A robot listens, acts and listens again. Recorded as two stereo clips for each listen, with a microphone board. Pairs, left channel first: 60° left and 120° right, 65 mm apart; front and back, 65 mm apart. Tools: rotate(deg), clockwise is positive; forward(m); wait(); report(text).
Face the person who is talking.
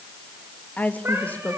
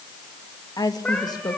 report("Found it: a woman speaking, straight ahead, 2 to 4 m away.")